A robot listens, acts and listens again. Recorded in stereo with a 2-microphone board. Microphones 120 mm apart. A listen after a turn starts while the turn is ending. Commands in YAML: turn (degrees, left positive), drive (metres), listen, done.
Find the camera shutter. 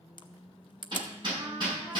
turn: 40
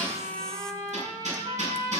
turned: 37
listen: true
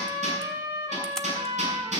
listen: true
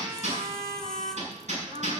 done: "I heard a camera shutter, but can't make it out now. It was about 5° left or 100° left."